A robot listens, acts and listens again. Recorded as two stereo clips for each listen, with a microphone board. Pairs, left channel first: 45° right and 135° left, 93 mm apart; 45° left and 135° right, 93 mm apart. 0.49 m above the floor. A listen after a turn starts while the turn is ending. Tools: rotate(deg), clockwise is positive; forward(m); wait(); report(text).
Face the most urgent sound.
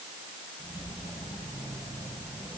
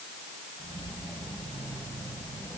wait()
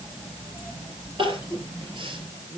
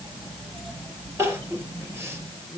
rotate(-160)
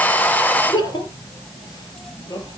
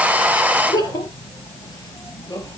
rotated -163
report("Found it: crying, straight ahead.")